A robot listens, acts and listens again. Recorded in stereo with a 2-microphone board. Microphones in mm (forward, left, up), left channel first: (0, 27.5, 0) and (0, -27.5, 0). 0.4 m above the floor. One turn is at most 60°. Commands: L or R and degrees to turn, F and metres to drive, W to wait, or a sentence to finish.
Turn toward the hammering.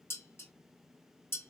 W
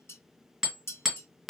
R30
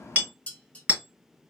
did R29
R60
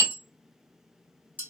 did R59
R60
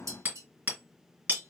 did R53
R35
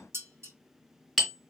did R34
Facing the hammering.